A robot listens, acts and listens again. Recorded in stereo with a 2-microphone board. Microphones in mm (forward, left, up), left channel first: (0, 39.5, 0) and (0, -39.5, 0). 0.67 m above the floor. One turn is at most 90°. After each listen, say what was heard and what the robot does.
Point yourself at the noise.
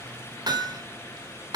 The hammering: about 60° right or 120° right. Turn 60° right.
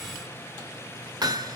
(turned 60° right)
So it is at 60° right. Turn 60° right.
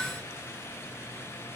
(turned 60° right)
Keep listening.
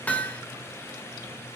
The hammering is now 20° left. Turn 20° left.
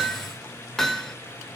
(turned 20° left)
Facing the hammering, 2 to 4 m away.